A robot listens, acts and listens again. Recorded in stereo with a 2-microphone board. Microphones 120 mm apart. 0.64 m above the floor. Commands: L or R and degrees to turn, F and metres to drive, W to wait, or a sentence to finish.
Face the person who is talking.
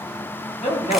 L65
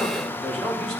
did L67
Facing the man speaking.